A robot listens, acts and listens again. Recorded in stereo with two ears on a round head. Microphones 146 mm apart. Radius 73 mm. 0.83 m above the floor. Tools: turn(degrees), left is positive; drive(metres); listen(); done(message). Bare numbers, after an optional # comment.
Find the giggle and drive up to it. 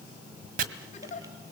# The giggle: about 45° left or 135° left.
turn(45)
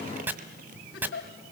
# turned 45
# So it is at 90° left.
turn(90)
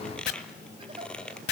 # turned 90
listen()
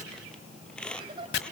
# The giggle is now 30° right.
turn(-30)
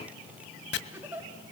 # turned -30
# The giggle is now 10° right.
turn(-10)
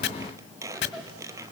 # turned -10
listen()
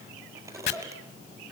listen()
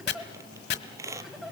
drive(1.0)
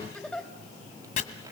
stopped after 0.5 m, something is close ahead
done("Blocked. The giggle is further on, straight ahead.")